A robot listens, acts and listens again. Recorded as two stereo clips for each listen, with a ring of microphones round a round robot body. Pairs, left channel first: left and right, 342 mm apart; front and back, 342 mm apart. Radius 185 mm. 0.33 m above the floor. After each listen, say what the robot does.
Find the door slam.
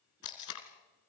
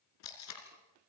Keep listening.
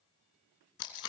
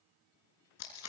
Keep listening.
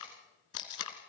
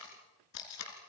I can't make out a door slam, only tape being pulled.